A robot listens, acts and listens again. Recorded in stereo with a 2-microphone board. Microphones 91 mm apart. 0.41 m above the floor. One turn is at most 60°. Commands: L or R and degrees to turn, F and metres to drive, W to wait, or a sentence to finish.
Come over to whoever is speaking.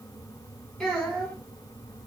L30
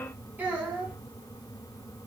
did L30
R20
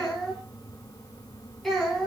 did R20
F1.0
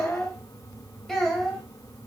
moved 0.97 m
F1.0
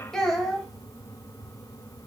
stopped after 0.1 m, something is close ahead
I am next to the child speaking.